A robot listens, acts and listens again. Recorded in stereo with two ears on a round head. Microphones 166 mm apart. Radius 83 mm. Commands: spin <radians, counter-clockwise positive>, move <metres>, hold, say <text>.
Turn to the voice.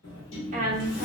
spin -0.79
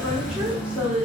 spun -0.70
say Found it: a woman speaking, straight ahead.